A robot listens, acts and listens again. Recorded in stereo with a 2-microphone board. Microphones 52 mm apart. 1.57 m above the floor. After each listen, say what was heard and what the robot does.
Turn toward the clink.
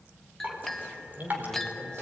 Turn 30° left.
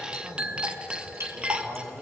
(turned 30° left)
So it is at 25° right. Turn 25° right.
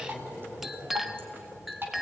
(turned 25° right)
Found it: a clink, straight ahead.